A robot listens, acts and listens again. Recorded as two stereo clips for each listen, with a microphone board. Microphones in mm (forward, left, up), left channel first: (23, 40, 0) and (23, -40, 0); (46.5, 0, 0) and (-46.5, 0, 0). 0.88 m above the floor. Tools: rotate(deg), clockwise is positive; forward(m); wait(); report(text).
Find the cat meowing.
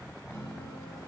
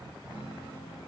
wait()
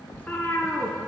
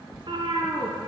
rotate(-155)
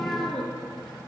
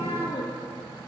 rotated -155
rotate(-10)
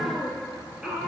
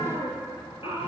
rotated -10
rotate(10)
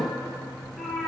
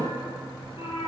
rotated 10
report("Facing the cat meowing, 2 to 4 m away.")